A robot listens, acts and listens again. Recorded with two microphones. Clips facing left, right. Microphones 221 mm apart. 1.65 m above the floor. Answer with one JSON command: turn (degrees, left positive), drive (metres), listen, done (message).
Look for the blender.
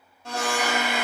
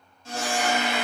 {"turn": 70}
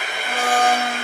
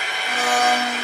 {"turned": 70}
{"turn": 30}
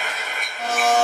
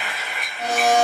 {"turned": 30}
{"done": "Found it: a blender, straight ahead."}